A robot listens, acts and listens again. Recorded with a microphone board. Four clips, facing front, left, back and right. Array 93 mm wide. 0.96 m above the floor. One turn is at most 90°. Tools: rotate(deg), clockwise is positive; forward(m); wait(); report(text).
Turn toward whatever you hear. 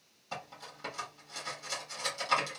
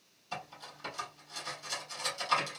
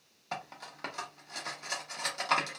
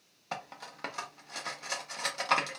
rotate(90)
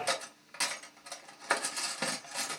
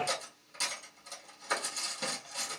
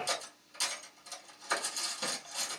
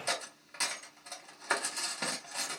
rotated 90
rotate(30)
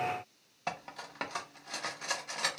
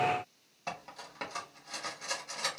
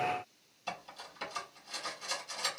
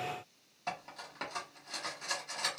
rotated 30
report("Found it: cutlery clinking, straight ahead, 1 to 2 m away.")